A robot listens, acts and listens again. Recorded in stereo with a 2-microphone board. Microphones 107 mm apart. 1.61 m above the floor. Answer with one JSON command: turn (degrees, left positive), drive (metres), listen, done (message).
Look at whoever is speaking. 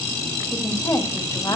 {"turn": 40}
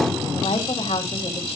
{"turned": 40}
{"turn": 100}
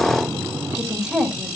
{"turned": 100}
{"done": "Facing the woman speaking, 2 to 4 m away."}